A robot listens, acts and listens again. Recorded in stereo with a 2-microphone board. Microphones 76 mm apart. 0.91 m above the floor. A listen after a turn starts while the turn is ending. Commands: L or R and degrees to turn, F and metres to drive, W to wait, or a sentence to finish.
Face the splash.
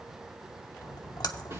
L65
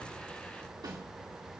W
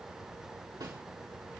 I heard a splash, but can't make it out now. It was about straight ahead or 50° left.